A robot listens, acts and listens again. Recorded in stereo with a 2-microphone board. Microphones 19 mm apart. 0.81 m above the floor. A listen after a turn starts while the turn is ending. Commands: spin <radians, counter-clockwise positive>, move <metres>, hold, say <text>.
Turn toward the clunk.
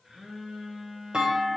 spin -1.05
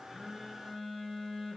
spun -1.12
hold
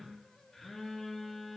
say I heard a clunk, but can't make it out now. It was about 5° left or 55° right.